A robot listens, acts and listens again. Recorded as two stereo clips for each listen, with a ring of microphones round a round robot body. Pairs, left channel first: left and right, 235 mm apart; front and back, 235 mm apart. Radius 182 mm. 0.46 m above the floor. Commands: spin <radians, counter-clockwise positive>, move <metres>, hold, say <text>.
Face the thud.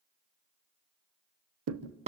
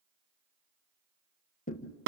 spin -1.13
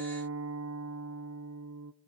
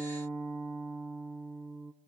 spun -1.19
say I heard a thud from this way, but can't make it out now.